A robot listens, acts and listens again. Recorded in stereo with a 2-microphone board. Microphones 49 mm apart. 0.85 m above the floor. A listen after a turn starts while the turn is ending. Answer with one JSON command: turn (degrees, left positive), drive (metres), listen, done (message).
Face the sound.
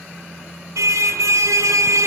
{"turn": -90}
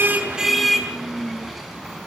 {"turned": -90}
{"done": "Facing the car horn."}